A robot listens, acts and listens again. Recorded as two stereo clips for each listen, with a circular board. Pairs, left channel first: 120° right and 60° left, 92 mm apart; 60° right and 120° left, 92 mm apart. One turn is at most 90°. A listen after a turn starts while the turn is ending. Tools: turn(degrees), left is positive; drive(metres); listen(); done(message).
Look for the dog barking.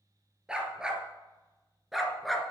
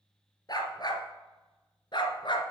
turn(degrees=-30)
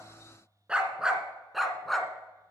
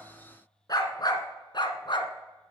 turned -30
turn(degrees=-35)
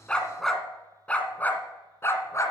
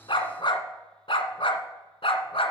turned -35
turn(degrees=-65)
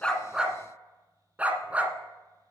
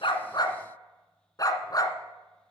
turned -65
turn(degrees=-15)
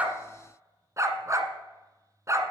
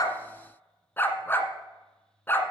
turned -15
done("Facing the dog barking.")